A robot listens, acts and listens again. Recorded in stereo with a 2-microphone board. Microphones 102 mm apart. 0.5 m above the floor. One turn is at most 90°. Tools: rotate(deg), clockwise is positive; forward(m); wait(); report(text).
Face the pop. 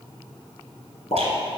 rotate(-65)
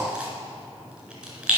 wait()
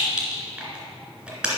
report("I heard a pop, but can't make it out now. It was about straight ahead or 50° left.")